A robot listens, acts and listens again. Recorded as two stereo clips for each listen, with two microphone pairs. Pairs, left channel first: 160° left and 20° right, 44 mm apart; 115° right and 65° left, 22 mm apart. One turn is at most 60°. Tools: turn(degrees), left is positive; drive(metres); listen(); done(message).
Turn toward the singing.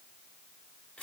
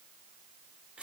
listen()
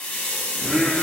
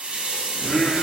turn(degrees=-60)
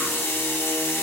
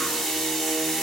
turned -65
turn(degrees=-30)
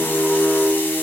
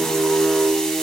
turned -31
turn(degrees=35)
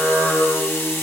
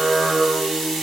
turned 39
done("Facing the singing.")